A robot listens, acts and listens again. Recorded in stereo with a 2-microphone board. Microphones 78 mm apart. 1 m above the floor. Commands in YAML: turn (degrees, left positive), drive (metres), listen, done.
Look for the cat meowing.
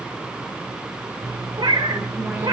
turn: -65
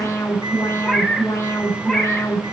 done: "Facing the cat meowing, 2 to 4 m away."